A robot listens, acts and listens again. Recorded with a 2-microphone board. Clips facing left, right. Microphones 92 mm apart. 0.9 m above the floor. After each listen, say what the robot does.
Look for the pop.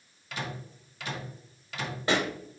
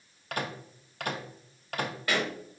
Turn 30° left.
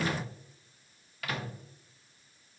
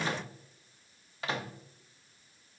Keep listening.
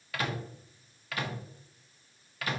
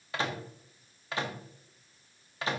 I heard a pop, but can't make it out now. It was about straight ahead or 120° left.